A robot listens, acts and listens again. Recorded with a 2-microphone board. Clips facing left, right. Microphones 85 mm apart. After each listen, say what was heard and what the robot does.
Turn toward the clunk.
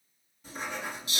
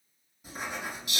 Keep listening.
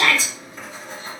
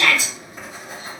Keep listening.
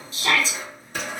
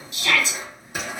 I can't make out a clunk to turn to.